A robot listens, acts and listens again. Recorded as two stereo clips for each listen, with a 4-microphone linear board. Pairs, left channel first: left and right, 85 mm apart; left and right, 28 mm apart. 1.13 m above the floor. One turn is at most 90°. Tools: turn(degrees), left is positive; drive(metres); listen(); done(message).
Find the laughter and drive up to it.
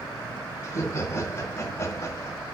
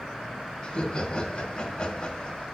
turn(degrees=35)
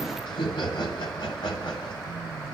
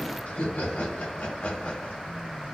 turn(degrees=90)
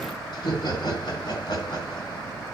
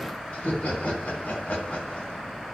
turn(degrees=65)
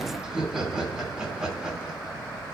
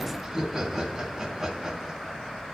turn(degrees=-10)
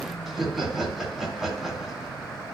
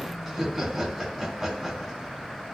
drive(metres=1.0)
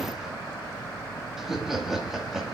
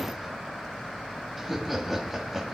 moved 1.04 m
drive(metres=1.0)
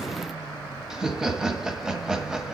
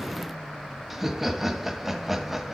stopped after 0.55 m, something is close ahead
turn(degrees=-10)
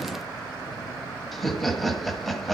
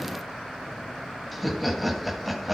done("I am next to the laughter.")